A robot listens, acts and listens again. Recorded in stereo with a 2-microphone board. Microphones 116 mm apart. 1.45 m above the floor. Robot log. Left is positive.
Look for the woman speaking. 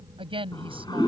note: The woman speaking: about 50° right or 130° right.
cmd yaw -50
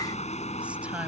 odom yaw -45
cmd idle
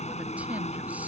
cmd idle
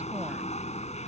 end: I heard a woman speaking, but can't make it out now. It was about 5° right or 85° right.